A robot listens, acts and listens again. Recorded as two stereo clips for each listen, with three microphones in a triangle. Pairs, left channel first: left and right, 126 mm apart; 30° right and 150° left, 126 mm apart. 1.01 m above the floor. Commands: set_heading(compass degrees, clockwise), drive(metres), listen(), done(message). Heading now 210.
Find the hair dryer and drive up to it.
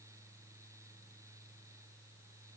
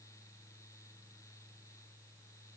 listen()
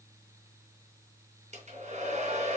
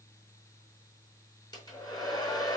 set_heading(295)
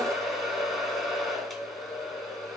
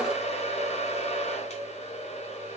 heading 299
drive(1.0)
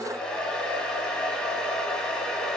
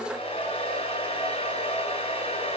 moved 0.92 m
set_heading(289)
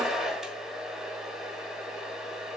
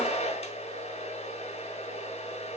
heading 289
drive(1.0)
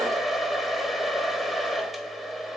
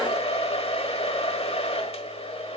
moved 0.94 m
drive(1.0)
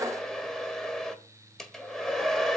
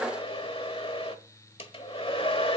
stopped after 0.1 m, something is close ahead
done("Arrived at the hair dryer, straight ahead.")